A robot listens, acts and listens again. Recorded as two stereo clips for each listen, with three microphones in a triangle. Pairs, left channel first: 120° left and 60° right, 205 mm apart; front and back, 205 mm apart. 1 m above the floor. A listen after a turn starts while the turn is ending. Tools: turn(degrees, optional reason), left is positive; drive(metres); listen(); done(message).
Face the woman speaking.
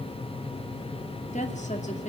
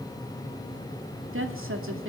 turn(degrees=175, reason="The woman speaking: 175° left.")
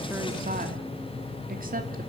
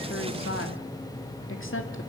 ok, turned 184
turn(degrees=-10, reason="The woman speaking is now 10° right.")
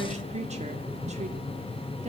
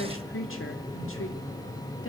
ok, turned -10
done("Facing the woman speaking, 2 to 4 m away.")